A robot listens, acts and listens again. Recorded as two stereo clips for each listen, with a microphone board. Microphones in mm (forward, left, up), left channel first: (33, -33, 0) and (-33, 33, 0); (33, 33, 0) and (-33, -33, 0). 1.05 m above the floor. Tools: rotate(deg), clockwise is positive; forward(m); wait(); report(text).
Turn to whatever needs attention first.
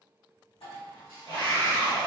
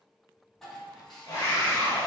rotate(10)
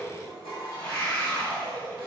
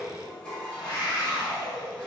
report("Found it: a scream, straight ahead.")